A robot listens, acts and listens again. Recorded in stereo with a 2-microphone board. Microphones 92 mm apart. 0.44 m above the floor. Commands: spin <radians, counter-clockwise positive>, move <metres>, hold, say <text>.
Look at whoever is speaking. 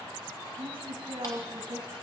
spin -1.22
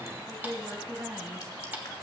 spin -0.52
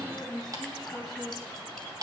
say Facing the woman speaking, 2 to 4 m away.